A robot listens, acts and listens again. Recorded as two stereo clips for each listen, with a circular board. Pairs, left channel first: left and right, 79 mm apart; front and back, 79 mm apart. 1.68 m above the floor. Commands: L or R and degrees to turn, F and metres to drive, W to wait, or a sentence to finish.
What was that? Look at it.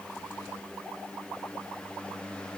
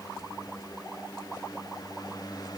W
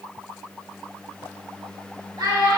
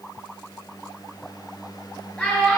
R70
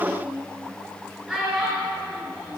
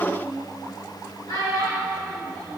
R10
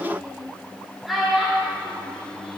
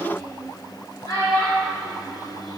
Found it: a child speaking, straight ahead, over 4 m away.